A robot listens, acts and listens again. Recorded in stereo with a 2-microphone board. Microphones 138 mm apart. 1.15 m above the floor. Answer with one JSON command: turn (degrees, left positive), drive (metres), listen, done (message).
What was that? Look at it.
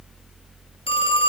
{"turn": 40}
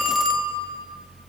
{"done": "Facing the phone ringing."}